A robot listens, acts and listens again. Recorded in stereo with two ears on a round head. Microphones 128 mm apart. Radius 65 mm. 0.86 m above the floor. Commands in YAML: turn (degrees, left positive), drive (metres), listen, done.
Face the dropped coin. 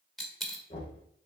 turn: 30
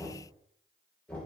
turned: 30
listen: true
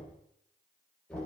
done: "I heard a dropped coin, but can't make it out now. It was about 30° right or 150° left."